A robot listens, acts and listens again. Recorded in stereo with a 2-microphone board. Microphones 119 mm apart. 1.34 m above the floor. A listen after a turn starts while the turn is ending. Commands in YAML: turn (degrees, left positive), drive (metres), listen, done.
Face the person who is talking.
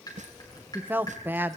turn: -15
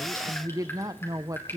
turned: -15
turn: -150
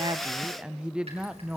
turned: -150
done: "Found it: a woman speaking, straight ahead, under 1 m away."